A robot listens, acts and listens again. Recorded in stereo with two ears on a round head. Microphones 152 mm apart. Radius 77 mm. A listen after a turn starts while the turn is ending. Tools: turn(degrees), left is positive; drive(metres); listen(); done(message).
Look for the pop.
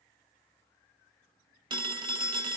listen()
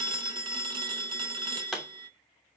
turn(degrees=30)
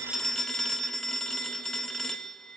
listen()
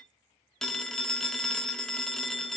done("I heard a pop, but can't make it out now. It was about 30° right or 150° left.")